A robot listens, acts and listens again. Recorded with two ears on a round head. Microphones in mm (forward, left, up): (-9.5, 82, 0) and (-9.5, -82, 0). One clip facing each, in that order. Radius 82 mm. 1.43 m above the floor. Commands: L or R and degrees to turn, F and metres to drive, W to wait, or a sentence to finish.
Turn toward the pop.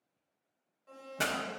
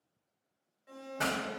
L35
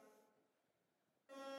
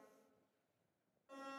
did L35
W
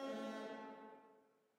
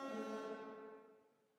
I heard a pop, but can't make it out now. It was about straight ahead or 110° left.